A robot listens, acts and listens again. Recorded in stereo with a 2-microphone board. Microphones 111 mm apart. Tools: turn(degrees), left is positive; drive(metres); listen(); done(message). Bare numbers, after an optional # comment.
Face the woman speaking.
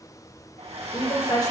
# The woman speaking: about 40° left or 140° left.
turn(40)
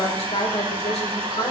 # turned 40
# So it is at 115° left.
turn(115)
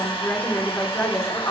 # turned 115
# The woman speaking is now 30° left.
turn(30)
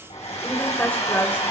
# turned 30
# The woman speaking is now 15° left.
turn(15)
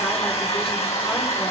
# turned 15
listen()
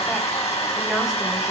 listen()
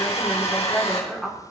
done("Found it: a woman speaking, straight ahead, 2 to 4 m away.")